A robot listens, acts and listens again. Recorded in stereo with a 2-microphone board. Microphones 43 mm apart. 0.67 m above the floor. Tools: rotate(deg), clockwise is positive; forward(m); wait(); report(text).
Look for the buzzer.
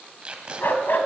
wait()
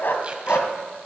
wait()
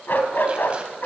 report("I can't make out a buzzer to turn to.")